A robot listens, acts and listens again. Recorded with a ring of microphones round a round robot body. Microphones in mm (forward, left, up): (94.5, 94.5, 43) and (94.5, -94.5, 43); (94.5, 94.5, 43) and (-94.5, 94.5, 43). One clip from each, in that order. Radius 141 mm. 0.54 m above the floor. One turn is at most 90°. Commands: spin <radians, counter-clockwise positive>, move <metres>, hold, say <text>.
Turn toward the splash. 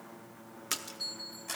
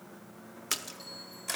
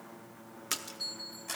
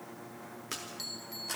spin -0.35
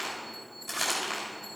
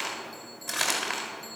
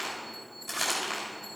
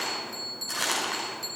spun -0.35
say Facing where the splash came from. I can't hear it now.